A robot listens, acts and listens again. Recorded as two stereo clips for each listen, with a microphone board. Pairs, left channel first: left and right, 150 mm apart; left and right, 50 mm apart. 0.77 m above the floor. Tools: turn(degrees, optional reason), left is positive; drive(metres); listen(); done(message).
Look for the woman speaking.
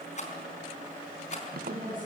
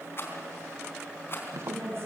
turn(degrees=-55, reason="The woman speaking: about 55° right or 125° right.")
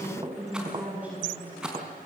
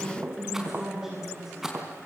turn(degrees=-10, reason="So it is at 10° right.")
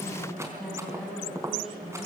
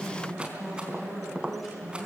done("Facing the woman speaking.")